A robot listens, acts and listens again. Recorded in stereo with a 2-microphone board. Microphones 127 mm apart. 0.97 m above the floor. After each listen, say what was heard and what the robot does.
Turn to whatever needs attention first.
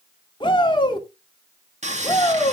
The shout: about 40° left or 140° left. Turn 40° left.
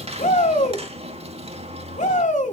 So it is at 100° left. Turn 100° left.
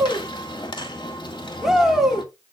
Found it: a shout, straight ahead.